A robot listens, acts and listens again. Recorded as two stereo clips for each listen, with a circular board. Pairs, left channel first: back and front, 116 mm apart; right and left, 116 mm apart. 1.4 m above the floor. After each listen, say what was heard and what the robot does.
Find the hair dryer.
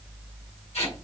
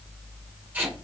Keep listening.
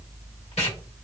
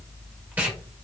Keep listening.
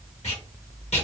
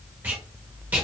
I can't make out a hair dryer to turn to.